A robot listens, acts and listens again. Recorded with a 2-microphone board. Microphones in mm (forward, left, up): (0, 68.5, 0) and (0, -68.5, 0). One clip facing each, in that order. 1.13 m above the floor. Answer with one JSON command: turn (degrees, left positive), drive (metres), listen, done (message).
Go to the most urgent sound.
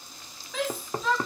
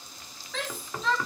{"turn": 30}
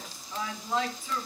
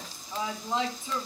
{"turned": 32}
{"turn": -25}
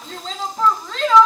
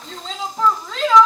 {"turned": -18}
{"drive": 1.0}
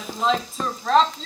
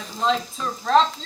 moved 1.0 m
{"drive": 1.0}
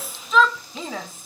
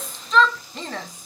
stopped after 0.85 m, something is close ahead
{"done": "Arrived at the shout, straight ahead."}